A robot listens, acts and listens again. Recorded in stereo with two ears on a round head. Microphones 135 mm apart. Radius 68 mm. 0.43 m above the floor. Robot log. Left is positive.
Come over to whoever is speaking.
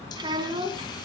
note: The child speaking: about 30° right or 150° right.
cmd yaw -30
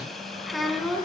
cmd fwd 1.0
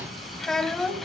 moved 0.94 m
cmd fwd 1.0
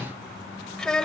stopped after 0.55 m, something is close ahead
end: Arrived at the child speaking, straight ahead.